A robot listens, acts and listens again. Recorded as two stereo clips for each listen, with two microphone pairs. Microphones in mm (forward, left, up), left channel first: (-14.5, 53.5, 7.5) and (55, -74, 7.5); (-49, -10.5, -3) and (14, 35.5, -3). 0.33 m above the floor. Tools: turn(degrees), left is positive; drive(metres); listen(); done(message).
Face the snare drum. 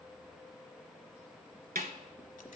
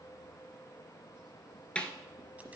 turn(degrees=-70)
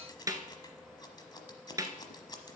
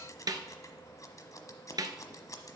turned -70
done("Facing the snare drum.")